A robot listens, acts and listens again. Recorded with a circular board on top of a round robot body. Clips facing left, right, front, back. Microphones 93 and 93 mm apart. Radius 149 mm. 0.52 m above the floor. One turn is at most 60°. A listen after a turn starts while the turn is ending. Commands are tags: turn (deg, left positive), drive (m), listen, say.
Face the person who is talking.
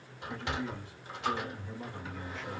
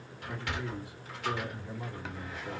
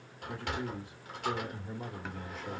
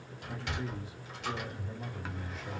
<turn deg="-15"/>
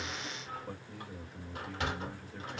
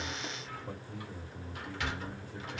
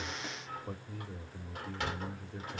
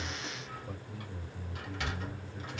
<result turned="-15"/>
<say>Facing the man speaking, 1 to 2 m away.</say>